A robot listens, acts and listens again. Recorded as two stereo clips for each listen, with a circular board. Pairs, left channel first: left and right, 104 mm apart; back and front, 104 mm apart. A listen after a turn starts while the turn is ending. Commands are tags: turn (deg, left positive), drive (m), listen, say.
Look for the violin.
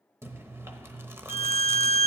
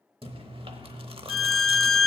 <turn deg="90"/>
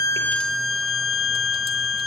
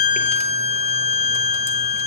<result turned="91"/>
<say>Found it: a violin, straight ahead.</say>